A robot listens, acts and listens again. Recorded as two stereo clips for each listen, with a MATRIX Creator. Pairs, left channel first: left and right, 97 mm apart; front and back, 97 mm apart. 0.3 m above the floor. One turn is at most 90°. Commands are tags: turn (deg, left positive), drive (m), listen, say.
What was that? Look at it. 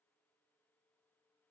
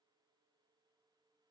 <listen/>
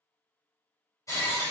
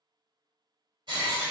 <turn deg="90"/>
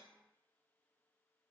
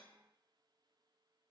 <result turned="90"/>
<turn deg="55"/>
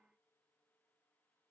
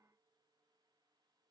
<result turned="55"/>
<say>Facing where the breaking glass came from. I can't hear it now.</say>